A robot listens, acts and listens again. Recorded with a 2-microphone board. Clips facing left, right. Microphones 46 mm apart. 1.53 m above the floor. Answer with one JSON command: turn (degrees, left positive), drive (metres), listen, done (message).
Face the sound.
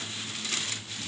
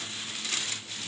{"listen": true}
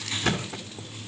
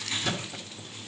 {"turn": 50}
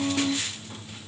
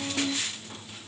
{"listen": true}
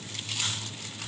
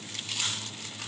{"done": "I heard a thud, but can't make it out now. It was about straight ahead or 80° left."}